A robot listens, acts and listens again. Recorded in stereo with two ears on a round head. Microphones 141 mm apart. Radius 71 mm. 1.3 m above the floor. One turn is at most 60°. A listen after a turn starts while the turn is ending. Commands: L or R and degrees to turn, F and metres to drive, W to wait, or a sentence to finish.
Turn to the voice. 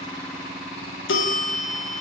W
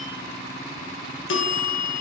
W
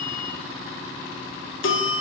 I can't make out anyone speaking, only a bell.